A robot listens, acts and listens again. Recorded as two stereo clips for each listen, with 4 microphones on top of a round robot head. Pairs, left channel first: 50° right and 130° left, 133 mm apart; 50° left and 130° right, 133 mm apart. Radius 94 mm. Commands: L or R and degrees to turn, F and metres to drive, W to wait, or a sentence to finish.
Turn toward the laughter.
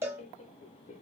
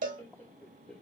R35
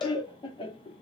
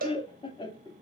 Facing the laughter, 1 to 2 m away.